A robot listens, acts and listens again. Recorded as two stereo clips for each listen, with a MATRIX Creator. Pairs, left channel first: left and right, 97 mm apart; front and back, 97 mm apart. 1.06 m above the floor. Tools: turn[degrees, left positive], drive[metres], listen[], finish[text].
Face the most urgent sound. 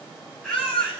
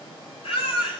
Thought: The baby crying: 10° left.
Action: turn[10]
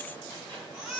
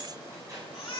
Action: finish[Found it: a baby crying, straight ahead, over 4 m away.]